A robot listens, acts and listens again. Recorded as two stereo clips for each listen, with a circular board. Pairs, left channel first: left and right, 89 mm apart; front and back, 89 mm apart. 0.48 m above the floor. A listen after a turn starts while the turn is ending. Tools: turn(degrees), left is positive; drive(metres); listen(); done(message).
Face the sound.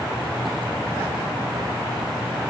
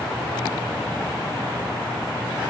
listen()
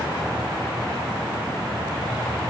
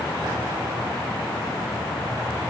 listen()
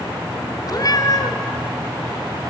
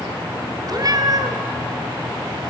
turn(degrees=135)
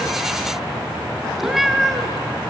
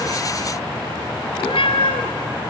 done("Facing the cat meowing.")